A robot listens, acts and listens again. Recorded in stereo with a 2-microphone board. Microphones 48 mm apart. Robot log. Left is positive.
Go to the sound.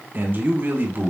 note: The man speaking: about 50° right or 130° right.
cmd yaw -50
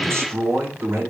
note: So it is at 80° right.
cmd yaw -80
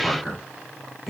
cmd fwd 1.0
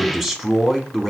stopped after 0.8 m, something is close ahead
end: I am next to the man speaking.